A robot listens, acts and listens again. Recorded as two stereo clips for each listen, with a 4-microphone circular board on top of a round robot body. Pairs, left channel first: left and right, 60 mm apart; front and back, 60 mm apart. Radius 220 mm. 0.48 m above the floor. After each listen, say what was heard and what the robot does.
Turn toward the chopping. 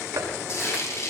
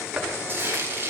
The chopping: 105° right. Turn 105° right.
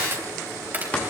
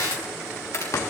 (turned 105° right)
The chopping is now 25° left. Turn 25° left.
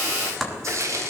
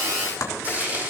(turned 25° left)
Facing the chopping, 2 to 4 m away.